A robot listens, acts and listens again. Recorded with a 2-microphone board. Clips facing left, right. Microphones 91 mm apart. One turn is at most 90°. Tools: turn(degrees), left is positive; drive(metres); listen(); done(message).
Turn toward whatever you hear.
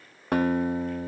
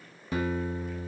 turn(degrees=60)
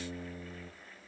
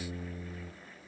turn(degrees=30)
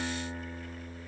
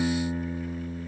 turn(degrees=-10)
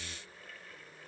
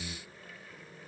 listen()
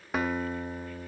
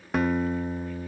done("Found it: a guitar, straight ahead.")